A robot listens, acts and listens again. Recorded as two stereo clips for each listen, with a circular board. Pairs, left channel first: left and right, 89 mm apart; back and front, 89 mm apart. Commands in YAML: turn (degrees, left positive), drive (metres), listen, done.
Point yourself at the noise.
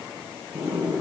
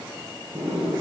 turn: -20
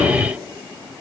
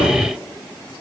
listen: true
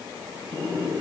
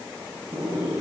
done: "Facing the sliding door."